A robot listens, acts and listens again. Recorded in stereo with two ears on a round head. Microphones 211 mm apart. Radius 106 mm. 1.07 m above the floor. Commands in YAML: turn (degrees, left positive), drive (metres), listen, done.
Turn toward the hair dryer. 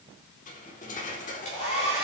turn: 35
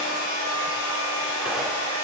turn: 110
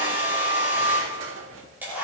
turn: -10
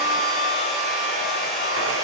done: "Facing the hair dryer, over 4 m away."